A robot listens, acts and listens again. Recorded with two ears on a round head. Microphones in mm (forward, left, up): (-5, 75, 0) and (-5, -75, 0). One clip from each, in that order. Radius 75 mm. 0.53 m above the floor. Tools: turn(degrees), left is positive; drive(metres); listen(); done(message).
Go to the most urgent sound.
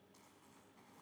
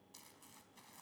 listen()
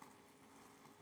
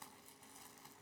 listen()
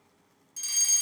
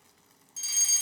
turn(degrees=-30)
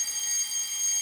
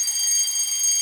turn(degrees=-145)
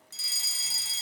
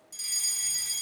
turn(degrees=25)
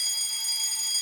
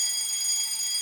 drive(metres=1.0)
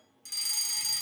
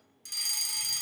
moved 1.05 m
turn(degrees=-10)
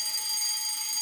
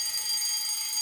drive(metres=1.0)
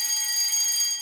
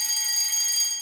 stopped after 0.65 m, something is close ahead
done("Arrived at the fire alarm, straight ahead.")